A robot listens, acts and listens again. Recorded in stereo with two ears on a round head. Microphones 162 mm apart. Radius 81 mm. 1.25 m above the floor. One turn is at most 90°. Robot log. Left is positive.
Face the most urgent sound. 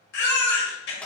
note: The baby crying: about 60° left or 120° left.
cmd yaw +60
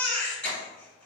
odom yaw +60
end: Facing the baby crying, 1 to 2 m away.